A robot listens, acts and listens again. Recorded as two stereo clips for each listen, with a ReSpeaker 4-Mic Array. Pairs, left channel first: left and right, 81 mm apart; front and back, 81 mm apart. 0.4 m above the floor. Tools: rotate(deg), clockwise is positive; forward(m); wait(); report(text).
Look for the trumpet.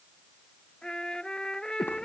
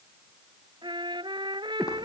rotate(-170)
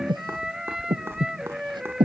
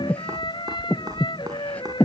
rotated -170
report("Found it: a trumpet, straight ahead.")